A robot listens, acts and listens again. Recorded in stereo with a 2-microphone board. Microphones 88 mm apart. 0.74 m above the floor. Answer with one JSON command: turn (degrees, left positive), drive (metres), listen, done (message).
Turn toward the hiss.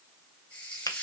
{"turn": 20}
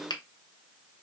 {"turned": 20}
{"listen": true}
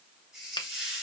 {"done": "Facing the hiss."}